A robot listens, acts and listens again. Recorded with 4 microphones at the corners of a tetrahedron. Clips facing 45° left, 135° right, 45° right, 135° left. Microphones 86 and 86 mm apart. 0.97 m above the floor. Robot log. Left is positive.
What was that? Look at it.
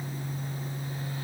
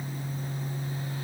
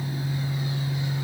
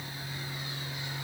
cmd idle
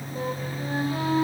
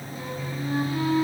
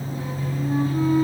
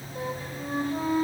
note: The flute: 95° left.
cmd yaw +95
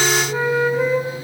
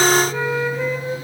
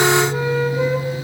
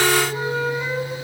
note: The flute is now 25° right.
cmd yaw -25
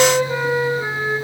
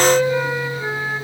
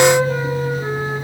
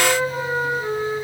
note: The flute is now 15° right.
cmd yaw -15
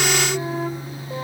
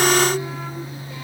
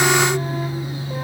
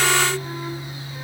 cmd idle
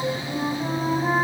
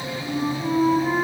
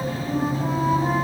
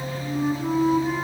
end: Found it: a flute, straight ahead.